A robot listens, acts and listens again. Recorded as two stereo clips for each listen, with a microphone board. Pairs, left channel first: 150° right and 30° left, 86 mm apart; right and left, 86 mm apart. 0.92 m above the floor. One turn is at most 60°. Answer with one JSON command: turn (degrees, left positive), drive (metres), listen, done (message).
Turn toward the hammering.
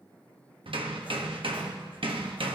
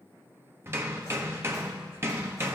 {"turn": 30}
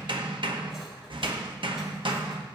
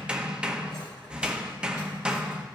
{"turn": 10}
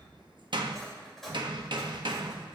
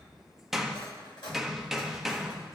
{"done": "Facing the hammering."}